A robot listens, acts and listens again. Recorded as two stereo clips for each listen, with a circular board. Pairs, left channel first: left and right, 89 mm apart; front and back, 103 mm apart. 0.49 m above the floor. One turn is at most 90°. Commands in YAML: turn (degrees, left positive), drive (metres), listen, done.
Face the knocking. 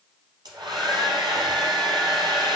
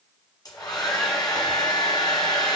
listen: true
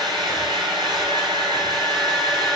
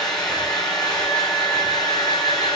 listen: true
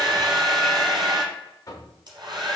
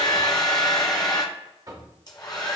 turn: 90
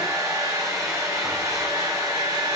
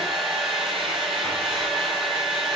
turn: 45
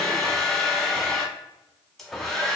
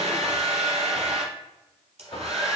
done: "Found it: knocking, straight ahead."